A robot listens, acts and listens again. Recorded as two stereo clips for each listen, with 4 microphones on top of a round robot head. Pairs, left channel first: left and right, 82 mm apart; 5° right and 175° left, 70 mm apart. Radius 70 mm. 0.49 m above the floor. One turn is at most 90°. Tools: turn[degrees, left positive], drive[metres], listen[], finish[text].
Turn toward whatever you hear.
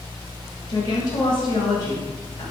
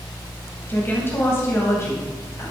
Thought: The woman speaking: 45° left.
Action: turn[45]
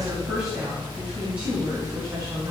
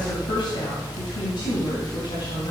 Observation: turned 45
Thought: The woman speaking is now 25° right.
Action: turn[-25]
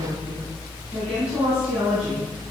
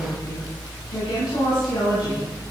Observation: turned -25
Thought: The woman speaking is now 15° right.
Action: turn[-15]
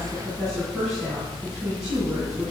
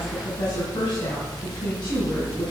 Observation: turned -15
Action: finish[Found it: a woman speaking, straight ahead.]